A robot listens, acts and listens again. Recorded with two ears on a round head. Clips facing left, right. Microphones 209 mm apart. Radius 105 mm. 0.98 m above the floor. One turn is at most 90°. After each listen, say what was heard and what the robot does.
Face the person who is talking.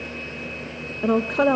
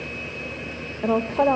The woman speaking: about 20° left or 160° left. Turn 20° left.
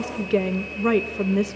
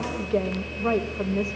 So it is at 135° left. Turn 90° left.
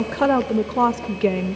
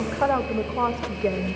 The woman speaking is now 60° left. Turn 60° left.
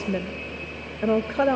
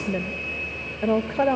The woman speaking is now 10° left. Turn 10° left.
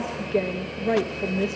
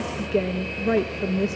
Found it: a woman speaking, straight ahead.